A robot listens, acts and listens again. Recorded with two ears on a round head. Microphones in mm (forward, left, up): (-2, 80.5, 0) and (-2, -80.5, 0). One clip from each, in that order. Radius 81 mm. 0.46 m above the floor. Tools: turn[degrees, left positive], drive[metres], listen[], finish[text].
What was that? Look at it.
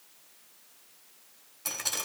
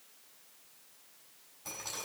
Thought: The dripping: about 60° left or 120° left.
Action: turn[60]
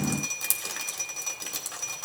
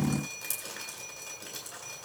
Thought: So it is at 50° left.
Action: turn[50]
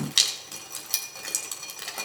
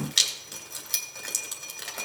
Action: finish[Facing the dripping.]